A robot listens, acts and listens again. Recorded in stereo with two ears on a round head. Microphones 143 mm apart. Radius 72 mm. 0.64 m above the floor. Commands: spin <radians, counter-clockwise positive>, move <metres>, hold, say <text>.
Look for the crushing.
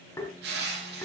spin -1.31
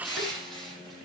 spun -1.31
say Facing the crushing, over 4 m away.